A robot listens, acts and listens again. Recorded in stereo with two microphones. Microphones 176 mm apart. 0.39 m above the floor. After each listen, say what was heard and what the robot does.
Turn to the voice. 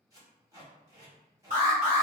Keep listening.
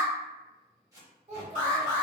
The child speaking: about 35° right or 145° right. Turn 35° right.
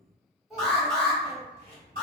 Found it: a child speaking, straight ahead, under 1 m away.